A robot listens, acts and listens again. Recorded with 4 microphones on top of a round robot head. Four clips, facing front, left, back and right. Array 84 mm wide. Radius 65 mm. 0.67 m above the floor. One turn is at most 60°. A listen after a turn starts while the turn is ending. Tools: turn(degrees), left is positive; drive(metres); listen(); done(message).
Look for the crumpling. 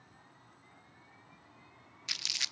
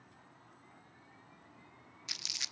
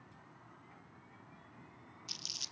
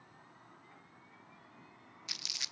turn(degrees=10)
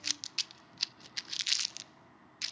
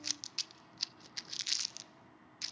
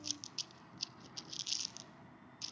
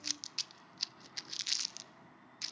done("Found it: crumpling, straight ahead, under 1 m away.")